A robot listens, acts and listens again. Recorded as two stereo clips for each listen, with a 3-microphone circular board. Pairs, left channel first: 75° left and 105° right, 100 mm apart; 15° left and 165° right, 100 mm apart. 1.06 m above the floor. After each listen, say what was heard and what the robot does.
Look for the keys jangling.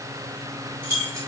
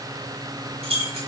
The keys jangling: 165° right. Turn 165° right.
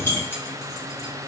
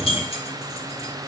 The keys jangling is now 10° left. Turn 10° left.
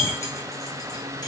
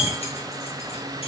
The keys jangling is now 10° left. Turn 10° left.
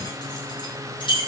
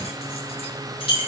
The keys jangling is now 40° left. Turn 40° left.
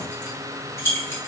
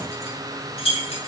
The keys jangling is now 10° left. Turn 10° left.
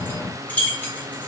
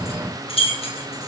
Found it: keys jangling, straight ahead.